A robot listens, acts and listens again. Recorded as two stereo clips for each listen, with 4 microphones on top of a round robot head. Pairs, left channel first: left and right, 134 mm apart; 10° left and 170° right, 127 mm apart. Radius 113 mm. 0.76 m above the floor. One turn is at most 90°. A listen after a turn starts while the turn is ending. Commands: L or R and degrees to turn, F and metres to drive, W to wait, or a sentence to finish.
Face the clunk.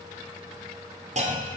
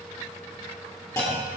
R65
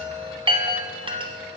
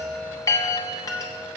Facing where the clunk came from. I can't hear it now.